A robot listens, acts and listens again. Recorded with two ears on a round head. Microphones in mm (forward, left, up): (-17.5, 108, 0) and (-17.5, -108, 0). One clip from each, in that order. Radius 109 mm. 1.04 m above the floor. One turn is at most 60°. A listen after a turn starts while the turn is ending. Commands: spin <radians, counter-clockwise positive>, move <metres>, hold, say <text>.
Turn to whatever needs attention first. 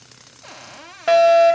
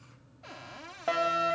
spin 0.96
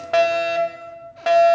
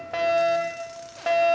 spin 0.26
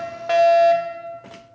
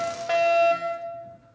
say Facing the fire alarm, 2 to 4 m away.